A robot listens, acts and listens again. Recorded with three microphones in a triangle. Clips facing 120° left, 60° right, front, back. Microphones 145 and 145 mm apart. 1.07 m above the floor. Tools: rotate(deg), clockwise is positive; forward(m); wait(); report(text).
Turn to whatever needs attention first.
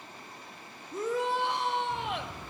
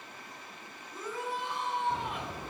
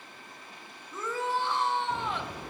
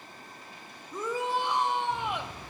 rotate(-105)
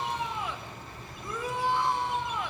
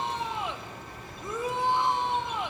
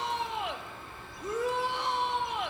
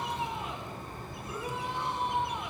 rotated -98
rotate(-10)
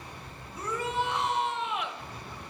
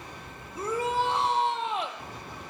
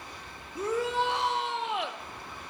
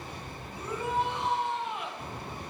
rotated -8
report("Facing the shout.")